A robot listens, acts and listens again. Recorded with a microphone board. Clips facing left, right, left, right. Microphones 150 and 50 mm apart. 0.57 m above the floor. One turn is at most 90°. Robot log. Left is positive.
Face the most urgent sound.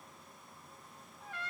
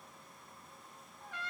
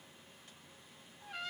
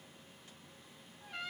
cmd idle
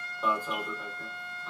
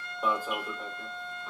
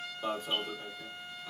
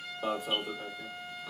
cmd yaw -30
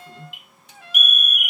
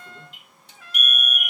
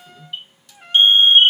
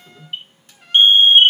note: So it is at 140° right.
cmd yaw -90
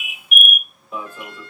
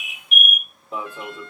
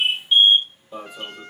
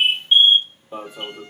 note: The alarm is now 40° right.
cmd yaw -40
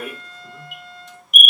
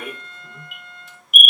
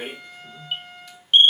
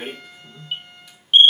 end: Facing the alarm.